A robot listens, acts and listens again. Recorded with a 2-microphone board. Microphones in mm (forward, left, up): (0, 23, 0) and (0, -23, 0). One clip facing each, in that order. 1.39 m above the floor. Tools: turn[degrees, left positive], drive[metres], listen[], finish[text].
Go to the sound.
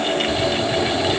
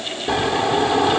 Thought: The snoring: about 60° right or 120° right.
Action: turn[-60]
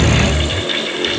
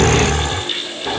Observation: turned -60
Thought: So it is at 60° right.
Action: turn[-60]
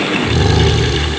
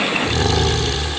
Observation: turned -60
Action: drive[1.0]
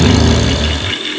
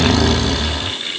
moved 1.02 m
Action: drive[1.0]
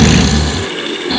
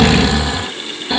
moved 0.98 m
Thought: The snoring is now 10° right.
Action: turn[-10]
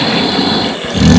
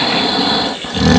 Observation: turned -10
Action: drive[1.0]
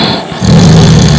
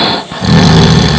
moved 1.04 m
Action: drive[1.0]
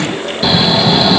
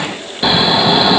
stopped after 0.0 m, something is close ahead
Thought: The snoring is now 10° right.
Action: turn[-10]
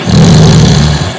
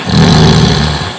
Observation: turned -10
Action: finish[I am next to the snoring.]